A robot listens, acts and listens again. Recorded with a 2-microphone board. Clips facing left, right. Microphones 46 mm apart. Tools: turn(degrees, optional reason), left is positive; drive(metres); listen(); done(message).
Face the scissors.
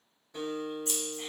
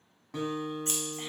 turn(degrees=-50, reason="The scissors: about 50° right or 130° right.")
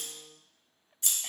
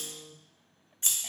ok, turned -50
turn(degrees=-65, reason="So it is at 65° right.")
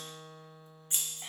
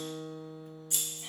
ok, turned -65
turn(degrees=40, reason="The scissors is now 40° left.")
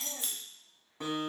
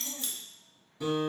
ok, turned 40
turn(degrees=20, reason="The scissors is now 20° left.")
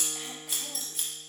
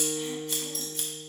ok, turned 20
done("Found it: scissors, straight ahead.")